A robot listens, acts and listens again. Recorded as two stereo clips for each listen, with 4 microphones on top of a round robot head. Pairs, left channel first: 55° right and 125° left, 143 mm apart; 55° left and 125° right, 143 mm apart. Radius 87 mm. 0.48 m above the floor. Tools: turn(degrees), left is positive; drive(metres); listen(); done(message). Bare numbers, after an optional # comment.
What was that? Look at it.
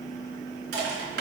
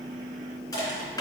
# The crushing: 125° left.
turn(125)
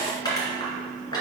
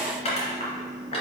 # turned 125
# The crushing is now 10° left.
turn(10)
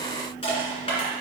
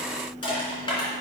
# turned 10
done("Found it: crushing, straight ahead, 2 to 4 m away.")